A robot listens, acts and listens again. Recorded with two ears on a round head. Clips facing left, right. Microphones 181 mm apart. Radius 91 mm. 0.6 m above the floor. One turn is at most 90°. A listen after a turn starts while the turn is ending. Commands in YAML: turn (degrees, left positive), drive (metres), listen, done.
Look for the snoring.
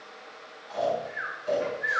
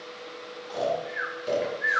turn: -55
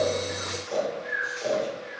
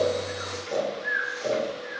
turn: -20
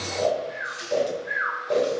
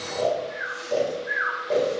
done: "Facing the snoring, 2 to 4 m away."